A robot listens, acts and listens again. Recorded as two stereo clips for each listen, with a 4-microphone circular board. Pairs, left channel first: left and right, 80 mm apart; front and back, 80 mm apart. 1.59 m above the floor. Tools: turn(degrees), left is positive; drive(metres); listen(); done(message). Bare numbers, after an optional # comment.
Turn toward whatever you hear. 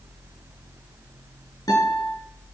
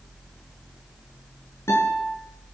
# The guitar: 55° left.
turn(55)
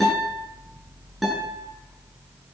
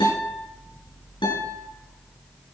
done("Found it: a guitar, straight ahead.")